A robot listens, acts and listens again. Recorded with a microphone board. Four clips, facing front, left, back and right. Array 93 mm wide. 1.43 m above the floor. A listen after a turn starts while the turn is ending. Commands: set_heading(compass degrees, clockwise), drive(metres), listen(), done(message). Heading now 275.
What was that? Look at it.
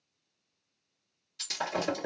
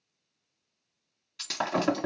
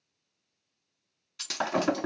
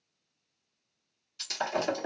set_heading(145)
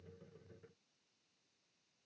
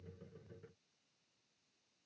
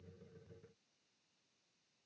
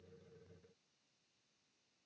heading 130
set_heading(145)
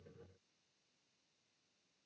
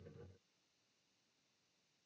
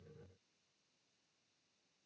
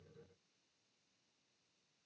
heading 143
done("Facing where the breaking glass came from. I can't hear it now.")